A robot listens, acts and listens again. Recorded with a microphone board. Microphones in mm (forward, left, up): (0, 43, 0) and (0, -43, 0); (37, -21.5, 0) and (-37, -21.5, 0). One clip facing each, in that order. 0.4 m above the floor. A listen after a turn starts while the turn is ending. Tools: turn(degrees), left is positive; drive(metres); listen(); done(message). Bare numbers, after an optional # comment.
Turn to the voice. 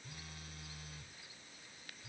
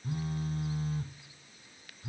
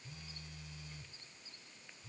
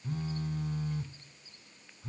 listen()
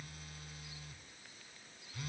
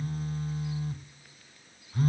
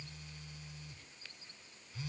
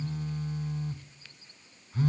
listen()
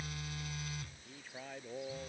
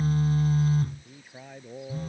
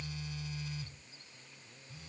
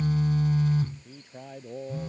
# The man speaking: 175° right.
turn(-175)
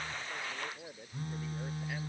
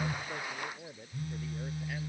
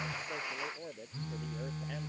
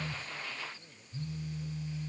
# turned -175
done("Facing the man speaking.")